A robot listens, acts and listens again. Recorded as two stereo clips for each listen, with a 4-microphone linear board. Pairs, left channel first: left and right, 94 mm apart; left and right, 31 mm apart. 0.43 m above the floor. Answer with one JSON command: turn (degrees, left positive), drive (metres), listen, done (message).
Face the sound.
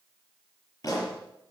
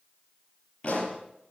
{"turn": 40}
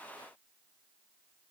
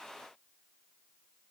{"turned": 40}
{"listen": true}
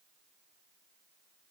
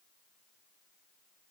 {"done": "I heard a pop, but can't make it out now. It was about straight ahead or 100° left."}